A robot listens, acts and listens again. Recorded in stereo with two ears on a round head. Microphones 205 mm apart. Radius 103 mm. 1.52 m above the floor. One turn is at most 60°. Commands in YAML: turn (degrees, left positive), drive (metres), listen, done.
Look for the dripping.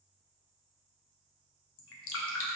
turn: 60
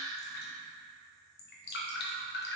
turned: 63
turn: 50
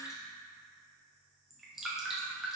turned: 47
done: "Facing the dripping, under 1 m away."